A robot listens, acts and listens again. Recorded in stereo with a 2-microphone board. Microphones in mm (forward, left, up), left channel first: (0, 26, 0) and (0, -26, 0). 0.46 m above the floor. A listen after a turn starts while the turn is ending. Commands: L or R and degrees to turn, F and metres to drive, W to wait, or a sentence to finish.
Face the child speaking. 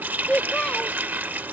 L20
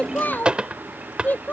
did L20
L35
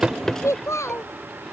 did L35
L115
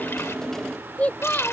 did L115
L30
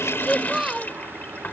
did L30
R10
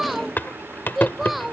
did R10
Found it: a child speaking, straight ahead.